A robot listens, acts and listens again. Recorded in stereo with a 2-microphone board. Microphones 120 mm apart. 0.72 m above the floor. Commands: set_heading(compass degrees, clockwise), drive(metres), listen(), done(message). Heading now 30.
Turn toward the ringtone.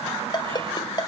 set_heading(355)
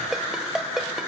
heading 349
done("Found it: a ringtone, straight ahead, 1 to 2 m away.")